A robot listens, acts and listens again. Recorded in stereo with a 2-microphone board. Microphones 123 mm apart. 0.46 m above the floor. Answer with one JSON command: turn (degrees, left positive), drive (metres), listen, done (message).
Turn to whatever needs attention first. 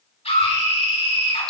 {"turn": 60}
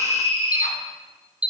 {"turn": 55}
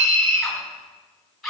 {"done": "Found it: a scream, straight ahead, over 4 m away."}